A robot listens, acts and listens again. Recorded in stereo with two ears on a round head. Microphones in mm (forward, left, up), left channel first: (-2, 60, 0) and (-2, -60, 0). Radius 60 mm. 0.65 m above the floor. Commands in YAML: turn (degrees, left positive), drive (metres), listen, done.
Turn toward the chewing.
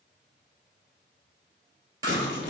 turn: -30
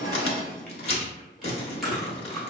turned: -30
done: "Facing the chewing, 1 to 2 m away."